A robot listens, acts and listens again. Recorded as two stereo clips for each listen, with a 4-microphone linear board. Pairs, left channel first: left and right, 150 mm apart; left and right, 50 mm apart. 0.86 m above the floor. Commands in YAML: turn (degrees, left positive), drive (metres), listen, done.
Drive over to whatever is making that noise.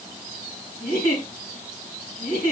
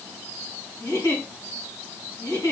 turn: 90
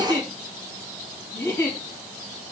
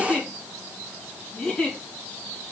turn: 15
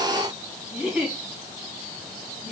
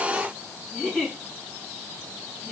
drive: 1.0
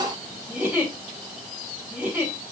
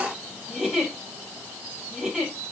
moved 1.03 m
turn: -10
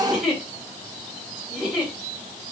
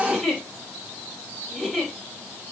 drive: 1.0
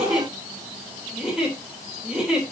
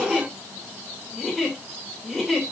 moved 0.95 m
drive: 1.0
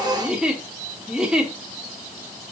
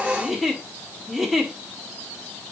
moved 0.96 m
drive: 1.0
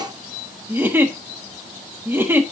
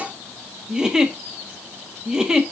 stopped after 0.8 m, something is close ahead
turn: -15
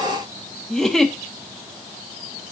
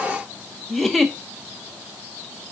done: "I am next to the giggle."